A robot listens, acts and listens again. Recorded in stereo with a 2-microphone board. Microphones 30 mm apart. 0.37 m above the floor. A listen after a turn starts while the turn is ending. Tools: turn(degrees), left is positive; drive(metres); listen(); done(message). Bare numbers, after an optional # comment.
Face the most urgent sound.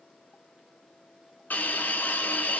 listen()
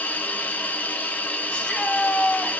# The shout: about 35° left or 145° left.
turn(35)
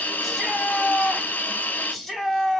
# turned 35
done("Found it: a shout, straight ahead.")